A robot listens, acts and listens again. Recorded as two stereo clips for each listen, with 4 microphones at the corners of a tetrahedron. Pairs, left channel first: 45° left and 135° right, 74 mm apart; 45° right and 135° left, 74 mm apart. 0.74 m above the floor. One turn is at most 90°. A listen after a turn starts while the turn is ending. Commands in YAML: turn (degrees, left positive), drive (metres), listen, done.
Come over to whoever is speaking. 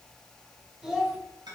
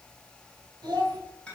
turn: 90
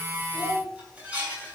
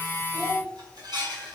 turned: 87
turn: 60
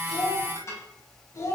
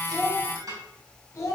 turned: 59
drive: 1.0
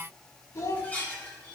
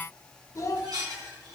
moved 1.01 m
drive: 1.0
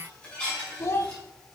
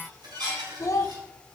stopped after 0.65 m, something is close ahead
done: "I am next to the child speaking."